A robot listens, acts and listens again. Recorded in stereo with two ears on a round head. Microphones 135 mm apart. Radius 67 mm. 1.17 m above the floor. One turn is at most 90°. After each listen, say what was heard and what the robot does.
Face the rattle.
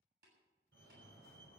Keep listening.
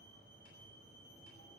Keep listening.
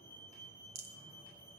The rattle: about 45° right or 135° right. Turn 45° right.
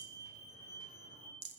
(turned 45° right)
So it is at 85° right. Turn 85° right.
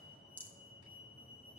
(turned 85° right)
The rattle is now 10° left. Turn 10° left.
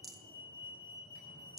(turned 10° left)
Facing the rattle.